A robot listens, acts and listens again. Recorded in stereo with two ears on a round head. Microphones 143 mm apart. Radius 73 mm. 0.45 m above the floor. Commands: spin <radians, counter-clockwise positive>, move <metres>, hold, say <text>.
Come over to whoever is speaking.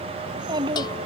spin -0.52
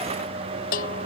hold
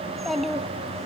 move 1.0
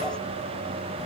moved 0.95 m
hold
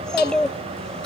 move 1.0
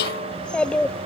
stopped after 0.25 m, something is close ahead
say Arrived at the child speaking, straight ahead.